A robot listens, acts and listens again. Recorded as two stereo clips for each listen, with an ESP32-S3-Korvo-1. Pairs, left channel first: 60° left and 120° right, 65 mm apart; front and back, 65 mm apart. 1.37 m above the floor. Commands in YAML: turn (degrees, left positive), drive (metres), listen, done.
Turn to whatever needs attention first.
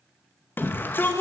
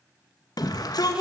done: "Facing the shout, 2 to 4 m away."